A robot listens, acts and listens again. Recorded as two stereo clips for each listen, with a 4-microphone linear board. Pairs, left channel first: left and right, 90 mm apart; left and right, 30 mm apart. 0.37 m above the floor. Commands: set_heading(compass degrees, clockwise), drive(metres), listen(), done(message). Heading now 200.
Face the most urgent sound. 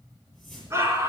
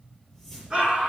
set_heading(230)
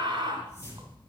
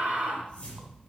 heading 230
set_heading(350)
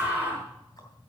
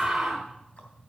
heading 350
set_heading(5)
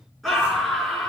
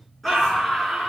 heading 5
done("Facing the scream, over 4 m away.")